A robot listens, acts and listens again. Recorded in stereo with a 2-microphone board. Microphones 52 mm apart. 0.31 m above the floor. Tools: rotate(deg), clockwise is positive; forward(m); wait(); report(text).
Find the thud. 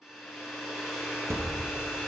rotate(50)
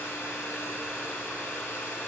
wait()
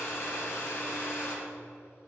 report("I heard a thud, but can't make it out now. It was about straight ahead or 80° right.")